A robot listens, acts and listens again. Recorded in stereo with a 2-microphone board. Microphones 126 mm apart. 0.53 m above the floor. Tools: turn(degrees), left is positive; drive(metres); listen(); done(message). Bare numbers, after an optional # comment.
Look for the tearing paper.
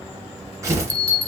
# The tearing paper: about 25° right or 155° right.
turn(-25)
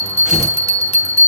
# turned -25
done("Facing the tearing paper.")